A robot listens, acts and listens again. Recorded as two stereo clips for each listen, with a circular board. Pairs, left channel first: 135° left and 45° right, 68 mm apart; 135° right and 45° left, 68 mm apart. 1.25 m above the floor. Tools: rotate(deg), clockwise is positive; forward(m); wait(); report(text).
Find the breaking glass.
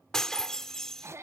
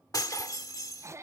rotate(145)
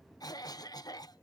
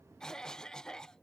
report("Facing where the breaking glass came from. I can't hear it now.")